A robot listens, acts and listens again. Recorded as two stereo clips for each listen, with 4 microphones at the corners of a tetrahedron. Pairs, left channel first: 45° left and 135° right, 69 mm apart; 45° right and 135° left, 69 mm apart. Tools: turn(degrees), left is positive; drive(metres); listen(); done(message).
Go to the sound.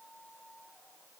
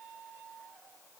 listen()
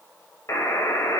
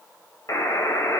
drive(metres=1.0)
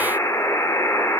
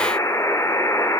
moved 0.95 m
drive(metres=1.0)
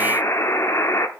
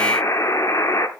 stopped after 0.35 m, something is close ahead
done("Arrived at the buzzer, straight ahead.")